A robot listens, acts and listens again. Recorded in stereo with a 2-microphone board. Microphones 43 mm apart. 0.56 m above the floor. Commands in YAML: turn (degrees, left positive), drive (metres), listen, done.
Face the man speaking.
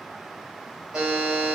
listen: true
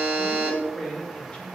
turn: 25
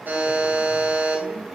listen: true
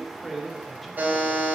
done: "Found it: a man speaking, straight ahead, 1 to 2 m away."